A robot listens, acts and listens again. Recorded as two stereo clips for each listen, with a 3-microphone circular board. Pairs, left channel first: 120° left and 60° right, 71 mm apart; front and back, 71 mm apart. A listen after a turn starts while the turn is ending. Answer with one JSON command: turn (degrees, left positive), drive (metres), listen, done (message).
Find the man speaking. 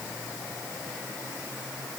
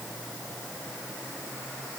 {"listen": true}
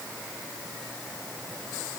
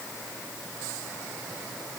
{"listen": true}
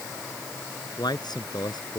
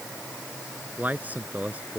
{"turn": 115}
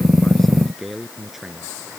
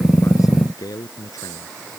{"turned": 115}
{"turn": 30}
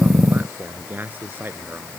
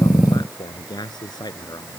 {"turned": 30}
{"done": "Facing the man speaking."}